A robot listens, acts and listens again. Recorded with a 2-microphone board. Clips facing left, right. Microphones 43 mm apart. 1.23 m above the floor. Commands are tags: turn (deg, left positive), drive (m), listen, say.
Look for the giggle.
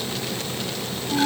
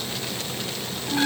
<listen/>
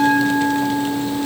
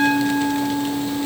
<listen/>
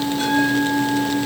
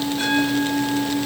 <say>I can't make out a giggle to turn to.</say>